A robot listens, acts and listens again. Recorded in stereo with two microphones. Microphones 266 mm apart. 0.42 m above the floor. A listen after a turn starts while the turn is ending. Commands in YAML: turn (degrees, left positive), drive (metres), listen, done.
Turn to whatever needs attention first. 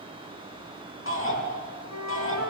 turn: 50
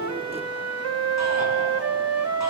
listen: true
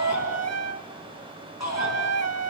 turn: 80
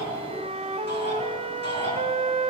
turn: 40
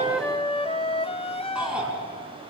done: "Found it: a shout, straight ahead, over 4 m away."